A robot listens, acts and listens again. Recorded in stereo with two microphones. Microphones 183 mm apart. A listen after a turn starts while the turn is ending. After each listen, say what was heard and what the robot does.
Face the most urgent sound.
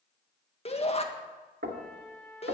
The shout: about 35° left or 145° left. Turn 35° left.
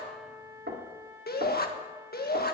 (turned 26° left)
So it is at 115° left. Turn 115° left.
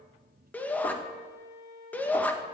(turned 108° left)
The shout is now 10° left. Turn 10° left.
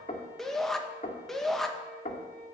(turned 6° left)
Facing the shout.